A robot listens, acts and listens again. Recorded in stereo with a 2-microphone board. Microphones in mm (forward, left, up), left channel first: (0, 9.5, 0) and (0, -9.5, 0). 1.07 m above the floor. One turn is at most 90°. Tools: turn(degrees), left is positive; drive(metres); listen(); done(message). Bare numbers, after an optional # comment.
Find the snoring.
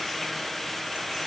listen()
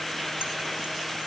listen()
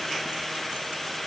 done("I can't make out snoring to turn to.")